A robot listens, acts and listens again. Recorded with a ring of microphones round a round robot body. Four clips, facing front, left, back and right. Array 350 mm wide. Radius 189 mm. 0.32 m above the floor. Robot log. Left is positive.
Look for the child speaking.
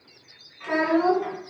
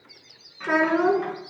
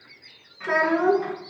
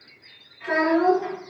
note: The child speaking: 110° left.
cmd yaw +110
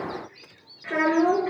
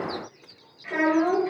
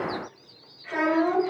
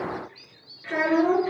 note: The child speaking is now 15° right.
cmd yaw -15
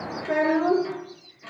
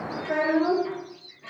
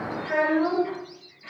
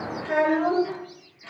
end: Facing the child speaking.